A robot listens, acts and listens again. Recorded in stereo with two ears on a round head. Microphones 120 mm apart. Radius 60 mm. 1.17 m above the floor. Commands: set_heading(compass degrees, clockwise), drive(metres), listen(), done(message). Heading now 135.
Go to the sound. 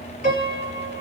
set_heading(75)
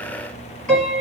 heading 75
set_heading(65)
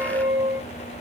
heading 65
drive(1.0)
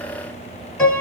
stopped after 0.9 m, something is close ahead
set_heading(50)
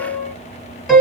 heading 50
done("I am next to the piano.")